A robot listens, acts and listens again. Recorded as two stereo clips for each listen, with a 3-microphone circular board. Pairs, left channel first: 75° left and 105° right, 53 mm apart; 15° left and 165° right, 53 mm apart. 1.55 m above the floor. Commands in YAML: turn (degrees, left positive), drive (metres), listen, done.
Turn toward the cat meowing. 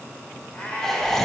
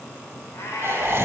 turn: 10
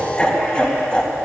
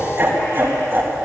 listen: true
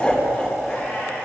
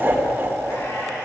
listen: true
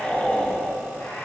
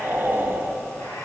done: "Facing where the cat meowing came from. I can't hear it now."